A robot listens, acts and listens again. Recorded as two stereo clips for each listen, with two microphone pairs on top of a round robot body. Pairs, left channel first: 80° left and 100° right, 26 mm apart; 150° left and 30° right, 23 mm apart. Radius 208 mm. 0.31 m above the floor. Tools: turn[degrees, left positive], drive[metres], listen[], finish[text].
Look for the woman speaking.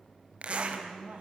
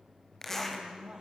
Thought: The woman speaking: 75° right.
Action: turn[-75]
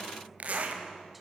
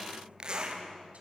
Action: listen[]
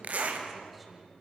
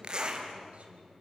Action: listen[]
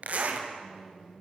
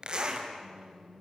Thought: The woman speaking is now 15° right.
Action: turn[-15]
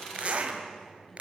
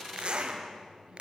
Action: listen[]
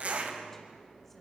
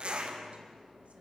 Action: listen[]
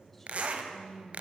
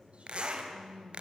Action: finish[Found it: a woman speaking, straight ahead.]